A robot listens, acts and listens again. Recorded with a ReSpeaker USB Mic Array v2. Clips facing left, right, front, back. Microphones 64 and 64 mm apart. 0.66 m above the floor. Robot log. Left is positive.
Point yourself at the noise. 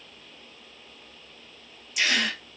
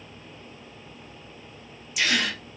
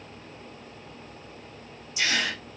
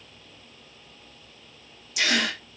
note: The gasp: straight behind.
cmd yaw +180
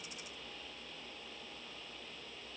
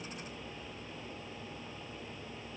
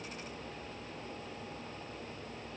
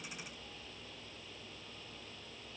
end: Facing where the gasp came from. I can't hear it now.